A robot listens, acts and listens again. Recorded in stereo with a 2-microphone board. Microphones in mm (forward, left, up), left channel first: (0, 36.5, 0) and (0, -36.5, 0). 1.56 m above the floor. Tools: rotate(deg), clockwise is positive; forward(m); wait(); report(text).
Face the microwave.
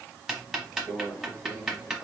rotate(-90)
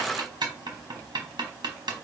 wait()
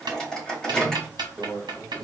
rotate(-10)
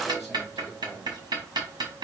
wait()
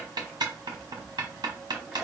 wait()
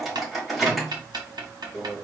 report("Found it: a microwave, straight ahead.")